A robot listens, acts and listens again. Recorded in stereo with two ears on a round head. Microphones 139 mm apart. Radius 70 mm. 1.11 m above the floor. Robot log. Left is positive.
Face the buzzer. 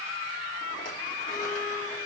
cmd idle
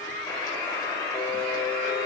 note: The buzzer: about 20° left or 160° left.
cmd yaw +20
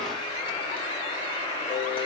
note: So it is at 145° left.
cmd yaw +145
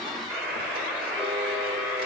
end: Facing the buzzer, 2 to 4 m away.